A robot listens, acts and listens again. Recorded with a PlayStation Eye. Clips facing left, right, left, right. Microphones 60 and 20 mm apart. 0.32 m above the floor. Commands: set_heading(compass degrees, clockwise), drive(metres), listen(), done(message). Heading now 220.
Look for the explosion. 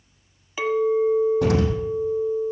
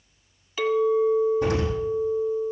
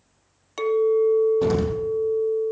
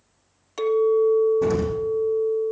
set_heading(130)
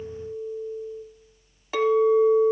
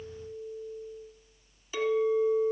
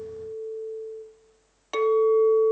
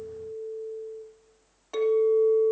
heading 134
done("I heard an explosion from this way, but can't make it out now.")